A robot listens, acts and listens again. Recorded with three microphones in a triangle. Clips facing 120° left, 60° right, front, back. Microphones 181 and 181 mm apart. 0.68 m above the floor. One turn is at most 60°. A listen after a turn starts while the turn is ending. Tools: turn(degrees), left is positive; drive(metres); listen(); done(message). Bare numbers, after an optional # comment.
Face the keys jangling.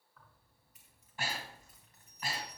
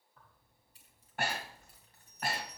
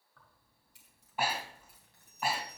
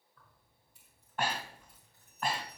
done("Facing the keys jangling, 2 to 4 m away.")